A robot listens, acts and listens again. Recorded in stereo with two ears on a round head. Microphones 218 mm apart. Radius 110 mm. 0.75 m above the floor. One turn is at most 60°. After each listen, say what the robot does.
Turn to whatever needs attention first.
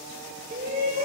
Turn 35° right.
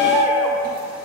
Found it: a shout, straight ahead, 2 to 4 m away.